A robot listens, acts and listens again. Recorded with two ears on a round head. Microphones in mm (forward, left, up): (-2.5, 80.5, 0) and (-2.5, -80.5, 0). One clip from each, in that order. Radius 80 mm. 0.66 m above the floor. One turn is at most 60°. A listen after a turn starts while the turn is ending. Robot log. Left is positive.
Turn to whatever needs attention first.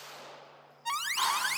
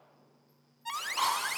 cmd yaw +30
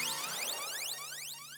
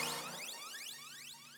note: So it is at 135° left.
cmd yaw +60
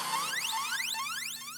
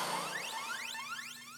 note: The alarm is now 95° left.
cmd yaw +60
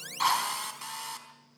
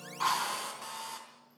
note: Nothing new. It was at 35° left.
cmd yaw +35
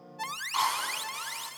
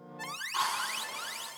note: The alarm is now 20° left.
cmd yaw +20
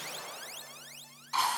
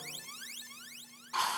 note: The alarm is now 10° left.
cmd yaw +10
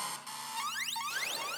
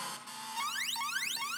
end: Facing the alarm.